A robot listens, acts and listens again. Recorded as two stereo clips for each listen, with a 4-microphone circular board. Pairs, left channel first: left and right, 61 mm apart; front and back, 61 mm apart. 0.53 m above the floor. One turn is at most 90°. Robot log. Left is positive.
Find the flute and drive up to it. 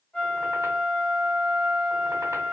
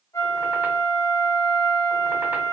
note: The flute: 20° left.
cmd yaw +20
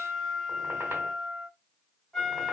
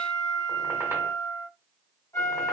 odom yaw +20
cmd fwd 1.0
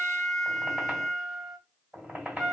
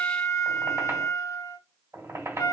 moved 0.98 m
cmd fwd 1.0
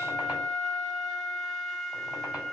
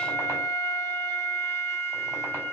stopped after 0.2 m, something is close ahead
end: I am next to the flute.